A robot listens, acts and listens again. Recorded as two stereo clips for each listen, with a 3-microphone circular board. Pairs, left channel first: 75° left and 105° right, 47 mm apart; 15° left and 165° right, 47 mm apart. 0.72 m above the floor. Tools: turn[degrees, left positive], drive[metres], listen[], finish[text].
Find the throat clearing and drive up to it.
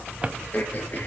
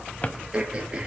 Thought: The throat clearing: 125° left.
Action: turn[125]
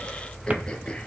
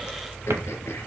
Action: listen[]
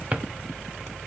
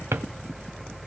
Action: listen[]
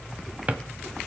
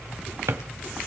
Action: finish[I heard throat clearing from this way, but can't make it out now. I did not reach it.]